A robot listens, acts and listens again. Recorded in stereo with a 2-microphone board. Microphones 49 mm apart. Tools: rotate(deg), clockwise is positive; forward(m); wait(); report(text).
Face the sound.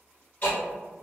rotate(-35)
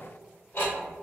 rotate(-105)
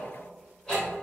rotate(-30)
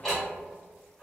rotate(-10)
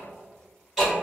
report("Found it: ticking, straight ahead, 1 to 2 m away.")